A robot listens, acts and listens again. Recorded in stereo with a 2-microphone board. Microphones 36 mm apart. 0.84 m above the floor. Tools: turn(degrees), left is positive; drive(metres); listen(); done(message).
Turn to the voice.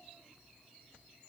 listen()
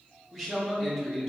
turn(degrees=30)
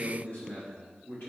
turn(degrees=120)
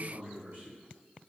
turn(degrees=-35)
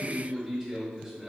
done("Found it: a man speaking, straight ahead, 1 to 2 m away.")